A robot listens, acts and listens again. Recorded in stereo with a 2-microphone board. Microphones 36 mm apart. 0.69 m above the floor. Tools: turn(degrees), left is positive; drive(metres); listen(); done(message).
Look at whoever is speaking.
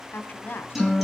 turn(degrees=60)
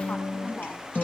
listen()
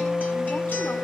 listen()
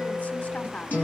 turn(degrees=55)
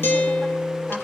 listen()
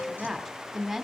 done("Facing the woman speaking, 2 to 4 m away.")